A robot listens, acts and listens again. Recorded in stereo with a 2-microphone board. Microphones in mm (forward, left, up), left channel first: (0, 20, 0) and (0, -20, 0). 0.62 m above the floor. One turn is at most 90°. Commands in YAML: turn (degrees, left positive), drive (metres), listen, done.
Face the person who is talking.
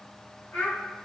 turn: 35
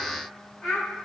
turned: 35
done: "Found it: a child speaking, straight ahead."